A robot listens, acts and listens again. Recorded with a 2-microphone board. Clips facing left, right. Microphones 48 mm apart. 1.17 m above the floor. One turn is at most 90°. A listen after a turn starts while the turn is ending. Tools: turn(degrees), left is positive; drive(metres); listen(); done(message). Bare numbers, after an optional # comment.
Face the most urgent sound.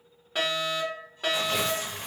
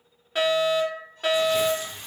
turn(-30)
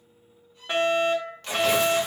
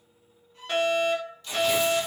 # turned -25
# So it is at 25° left.
turn(25)
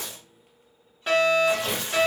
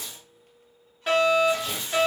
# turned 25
done("Found it: a fire alarm, straight ahead, 2 to 4 m away.")